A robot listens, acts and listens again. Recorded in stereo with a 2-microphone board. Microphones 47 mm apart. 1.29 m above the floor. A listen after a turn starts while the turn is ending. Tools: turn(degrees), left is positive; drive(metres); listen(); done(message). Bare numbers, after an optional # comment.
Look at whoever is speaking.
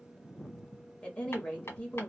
# The woman speaking: about 25° left or 155° left.
turn(25)
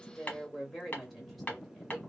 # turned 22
done("Facing the woman speaking.")